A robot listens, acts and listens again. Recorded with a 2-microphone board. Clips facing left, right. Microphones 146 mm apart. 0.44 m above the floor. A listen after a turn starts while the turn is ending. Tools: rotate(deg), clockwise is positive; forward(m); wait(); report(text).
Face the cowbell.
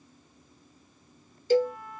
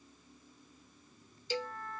rotate(-50)
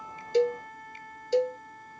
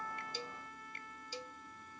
rotate(-80)
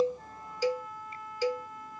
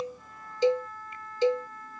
rotate(25)
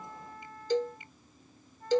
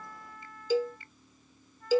report("Found it: a cowbell, straight ahead.")